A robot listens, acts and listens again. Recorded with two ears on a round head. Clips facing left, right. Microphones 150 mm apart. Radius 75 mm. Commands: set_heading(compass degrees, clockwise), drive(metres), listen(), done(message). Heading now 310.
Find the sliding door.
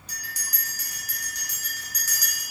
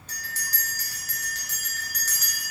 listen()
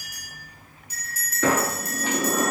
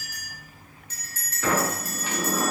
set_heading(220)
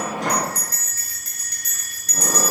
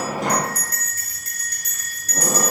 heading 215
done("Facing the sliding door.")